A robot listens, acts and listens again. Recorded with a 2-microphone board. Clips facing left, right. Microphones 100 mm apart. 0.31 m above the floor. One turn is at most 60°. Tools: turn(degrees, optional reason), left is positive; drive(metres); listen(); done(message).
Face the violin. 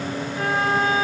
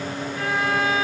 turn(degrees=25, reason="The violin: about 25° left or 155° left.")
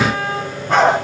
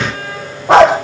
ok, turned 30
turn(degrees=60, reason="So it is at 125° left.")
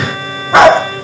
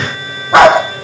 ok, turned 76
turn(degrees=45, reason="Nothing new. It was at 45° left.")
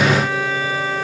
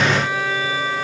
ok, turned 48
done("Facing the violin, over 4 m away.")